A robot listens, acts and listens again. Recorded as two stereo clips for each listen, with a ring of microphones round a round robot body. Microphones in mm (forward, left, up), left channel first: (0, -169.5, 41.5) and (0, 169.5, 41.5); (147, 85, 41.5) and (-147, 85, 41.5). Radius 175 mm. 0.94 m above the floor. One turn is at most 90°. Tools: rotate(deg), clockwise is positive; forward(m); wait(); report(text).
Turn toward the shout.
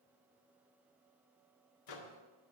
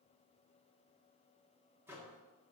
wait()
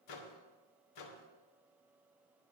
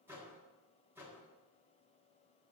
wait()
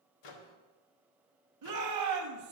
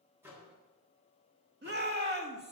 rotate(-90)
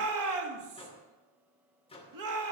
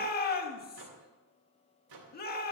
rotate(-60)
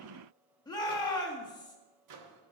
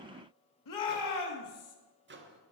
rotate(10)
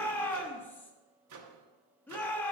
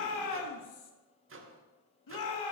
report("Facing the shout, 1 to 2 m away.")